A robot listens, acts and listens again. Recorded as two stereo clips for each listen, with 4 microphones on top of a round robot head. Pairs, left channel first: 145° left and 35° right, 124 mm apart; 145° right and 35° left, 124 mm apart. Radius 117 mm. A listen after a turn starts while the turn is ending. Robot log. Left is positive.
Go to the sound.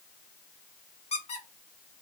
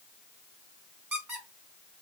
note: The squeak: 110° left.
cmd yaw +110
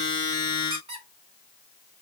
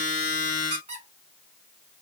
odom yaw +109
cmd fwd 1.0
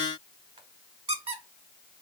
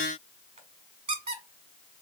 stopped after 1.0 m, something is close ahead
end: Arrived at the squeak, straight ahead.